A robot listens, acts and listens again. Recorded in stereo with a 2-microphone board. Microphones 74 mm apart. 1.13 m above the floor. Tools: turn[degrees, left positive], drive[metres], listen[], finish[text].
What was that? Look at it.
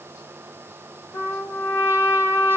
Thought: The trumpet: about 35° left or 145° left.
Action: turn[35]
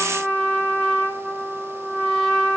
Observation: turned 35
Action: finish[Facing the trumpet, 2 to 4 m away.]